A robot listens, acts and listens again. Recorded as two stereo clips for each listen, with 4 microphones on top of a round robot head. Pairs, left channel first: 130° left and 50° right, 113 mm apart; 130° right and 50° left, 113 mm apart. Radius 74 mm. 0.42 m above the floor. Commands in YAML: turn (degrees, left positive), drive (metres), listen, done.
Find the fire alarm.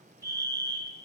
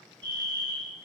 done: "Found it: a fire alarm, straight ahead."